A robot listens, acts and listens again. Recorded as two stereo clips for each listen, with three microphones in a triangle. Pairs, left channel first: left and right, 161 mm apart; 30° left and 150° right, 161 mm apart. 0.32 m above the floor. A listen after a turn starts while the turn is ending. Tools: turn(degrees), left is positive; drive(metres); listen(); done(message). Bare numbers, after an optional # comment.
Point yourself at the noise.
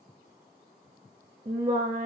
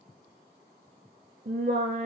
# The singing: 135° right.
turn(-135)
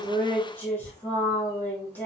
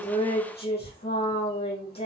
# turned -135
# The singing is now 10° left.
turn(10)
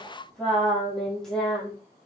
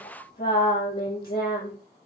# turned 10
done("Found it: singing, straight ahead.")